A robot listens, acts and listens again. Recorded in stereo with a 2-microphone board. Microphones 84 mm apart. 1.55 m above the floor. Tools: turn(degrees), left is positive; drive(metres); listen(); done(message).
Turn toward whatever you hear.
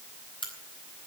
turn(degrees=90)
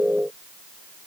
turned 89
done("I heard a crack from this way, but can't make it out now.")